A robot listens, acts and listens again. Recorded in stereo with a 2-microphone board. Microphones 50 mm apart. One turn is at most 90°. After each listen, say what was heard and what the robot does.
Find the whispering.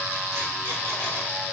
Keep listening.
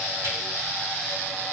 Keep listening.
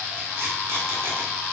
I can't make out whispering.